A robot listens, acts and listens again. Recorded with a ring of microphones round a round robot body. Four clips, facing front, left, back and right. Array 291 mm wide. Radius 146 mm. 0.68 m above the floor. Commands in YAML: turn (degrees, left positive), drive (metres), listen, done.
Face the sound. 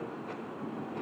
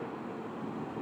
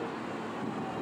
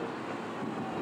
listen: true
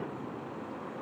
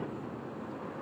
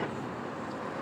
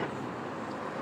listen: true
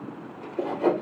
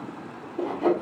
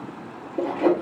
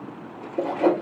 turn: -135
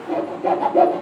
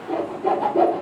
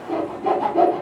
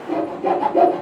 turn: -50
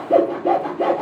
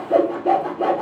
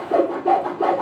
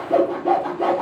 done: "Facing the sawing."